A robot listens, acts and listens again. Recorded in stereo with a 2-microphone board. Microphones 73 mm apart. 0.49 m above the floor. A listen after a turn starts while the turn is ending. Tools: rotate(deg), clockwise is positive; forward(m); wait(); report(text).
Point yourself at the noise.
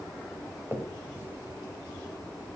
rotate(30)
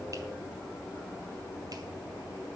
wait()
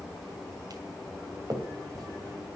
rotate(115)
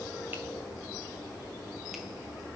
wait()
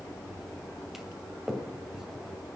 report("Found it: a finger snap, straight ahead, 2 to 4 m away.")